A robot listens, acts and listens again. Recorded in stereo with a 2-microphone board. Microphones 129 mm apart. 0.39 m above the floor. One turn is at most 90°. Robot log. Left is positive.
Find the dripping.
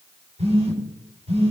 cmd idle
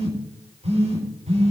cmd idle
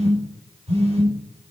end: I can't make out dripping, only a phone buzzing.